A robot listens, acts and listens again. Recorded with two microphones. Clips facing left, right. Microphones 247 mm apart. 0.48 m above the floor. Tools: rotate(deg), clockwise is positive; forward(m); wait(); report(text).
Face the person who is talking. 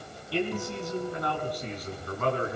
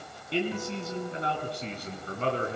rotate(30)
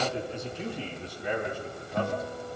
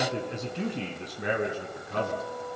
rotate(110)
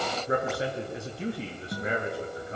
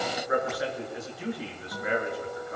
rotate(-25)
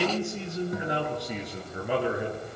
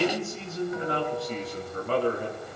rotate(-15)
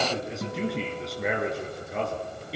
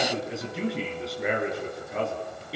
report("Facing the man speaking, over 4 m away.")